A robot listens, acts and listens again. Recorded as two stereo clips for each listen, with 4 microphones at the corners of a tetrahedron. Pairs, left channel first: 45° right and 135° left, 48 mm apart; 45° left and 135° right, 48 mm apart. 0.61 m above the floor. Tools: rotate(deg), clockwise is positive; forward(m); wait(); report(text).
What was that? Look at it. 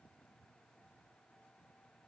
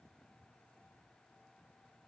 wait()
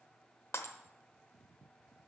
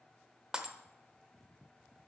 rotate(65)
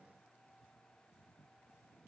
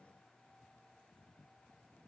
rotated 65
report("Facing where the breaking glass came from. I can't hear it now.")